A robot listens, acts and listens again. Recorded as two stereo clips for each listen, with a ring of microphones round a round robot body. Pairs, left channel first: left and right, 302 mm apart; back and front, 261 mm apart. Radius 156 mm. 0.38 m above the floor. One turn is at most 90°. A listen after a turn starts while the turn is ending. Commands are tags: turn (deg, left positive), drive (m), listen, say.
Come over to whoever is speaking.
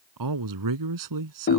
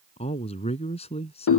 <turn deg="-90"/>
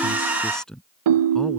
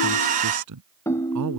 <drive m="1.0"/>
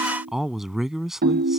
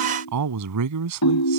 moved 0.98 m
<drive m="1.0"/>
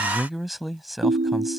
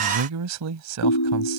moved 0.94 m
<drive m="1.0"/>
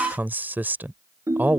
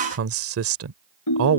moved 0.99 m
<drive m="1.0"/>
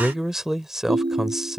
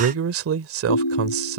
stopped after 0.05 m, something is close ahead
<say>Arrived at the man speaking, straight ahead.</say>